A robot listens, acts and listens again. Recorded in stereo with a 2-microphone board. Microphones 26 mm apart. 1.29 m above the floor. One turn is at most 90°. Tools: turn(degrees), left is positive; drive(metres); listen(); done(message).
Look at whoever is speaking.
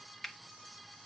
listen()
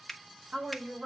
turn(degrees=-55)
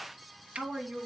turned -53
turn(degrees=-60)
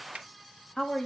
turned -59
turn(degrees=10)
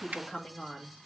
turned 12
turn(degrees=10)
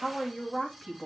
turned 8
done("Facing the woman speaking, 2 to 4 m away.")